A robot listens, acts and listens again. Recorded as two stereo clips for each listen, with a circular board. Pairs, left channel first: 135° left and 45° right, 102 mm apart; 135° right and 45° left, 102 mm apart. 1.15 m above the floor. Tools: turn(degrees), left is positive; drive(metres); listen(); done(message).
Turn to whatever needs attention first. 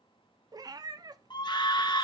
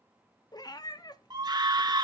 turn(degrees=90)
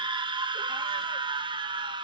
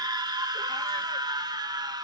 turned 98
done("Found it: a scream, straight ahead.")